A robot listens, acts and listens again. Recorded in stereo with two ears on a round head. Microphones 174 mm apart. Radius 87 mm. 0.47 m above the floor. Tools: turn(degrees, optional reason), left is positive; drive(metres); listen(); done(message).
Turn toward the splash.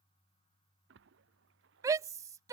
turn(degrees=-65, reason="The splash: about 65° right or 115° right.")
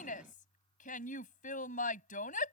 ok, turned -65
listen()
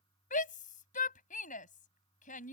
done("I heard a splash, but can't make it out now. It was about straight ahead or 50° right.")